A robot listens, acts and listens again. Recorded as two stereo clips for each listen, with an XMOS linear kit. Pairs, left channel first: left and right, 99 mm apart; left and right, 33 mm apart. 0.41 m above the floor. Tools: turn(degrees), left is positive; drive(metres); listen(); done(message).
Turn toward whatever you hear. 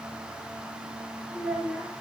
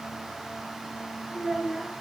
turn(degrees=-30)
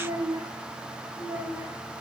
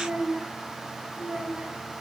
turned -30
turn(degrees=-155)
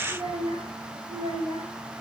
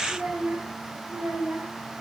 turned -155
turn(degrees=-70)
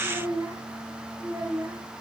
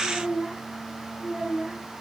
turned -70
turn(degrees=-30)
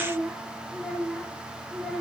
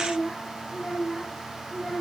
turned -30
done("Found it: a child speaking, straight ahead, over 4 m away.")